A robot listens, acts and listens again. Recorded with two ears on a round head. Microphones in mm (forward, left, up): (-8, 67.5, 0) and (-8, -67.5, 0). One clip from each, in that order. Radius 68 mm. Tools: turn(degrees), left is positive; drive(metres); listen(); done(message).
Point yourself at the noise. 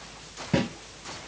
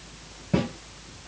turn(degrees=30)
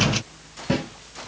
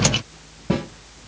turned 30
turn(degrees=120)
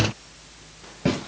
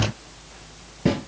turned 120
turn(degrees=20)
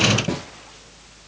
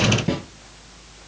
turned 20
done("Facing the snare drum.")